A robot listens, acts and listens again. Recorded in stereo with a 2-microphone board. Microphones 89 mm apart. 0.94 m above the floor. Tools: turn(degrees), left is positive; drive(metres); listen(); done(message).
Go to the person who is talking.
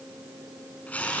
listen()
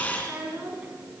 turn(degrees=-15)
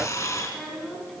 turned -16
drive(metres=1.0)
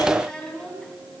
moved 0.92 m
turn(degrees=10)
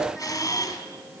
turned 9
listen()
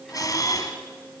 listen()
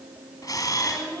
drive(metres=1.0)
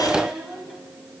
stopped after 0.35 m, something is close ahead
done("Blocked. The child speaking is further on, straight ahead.")